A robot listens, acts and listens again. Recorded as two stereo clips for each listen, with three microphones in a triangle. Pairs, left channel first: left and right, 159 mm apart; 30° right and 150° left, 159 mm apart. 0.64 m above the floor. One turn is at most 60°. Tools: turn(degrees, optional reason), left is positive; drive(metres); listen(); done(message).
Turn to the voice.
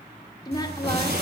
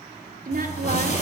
turn(degrees=60, reason="The woman speaking: 150° left.")
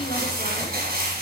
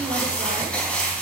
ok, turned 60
turn(degrees=60, reason="Nothing new. It was at 90° left.")
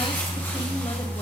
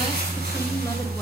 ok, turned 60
turn(degrees=30, reason="Nothing new. It was at 30° left.")
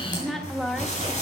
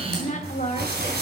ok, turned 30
done("Facing the woman speaking.")